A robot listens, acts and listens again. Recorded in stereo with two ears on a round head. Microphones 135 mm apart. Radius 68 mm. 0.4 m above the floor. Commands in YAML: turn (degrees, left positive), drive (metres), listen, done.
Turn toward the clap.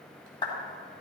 turn: 30
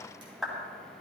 done: "Found it: a clap, straight ahead, 2 to 4 m away."